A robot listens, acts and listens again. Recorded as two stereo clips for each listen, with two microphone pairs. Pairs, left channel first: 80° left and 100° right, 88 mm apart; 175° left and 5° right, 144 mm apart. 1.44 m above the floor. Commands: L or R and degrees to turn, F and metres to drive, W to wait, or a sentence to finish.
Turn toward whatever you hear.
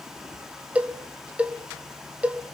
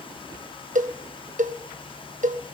R25
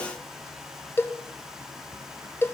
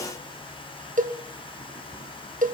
L15
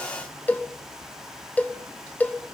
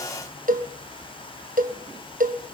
L10
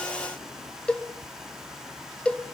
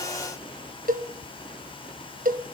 Found it: a cowbell, straight ahead.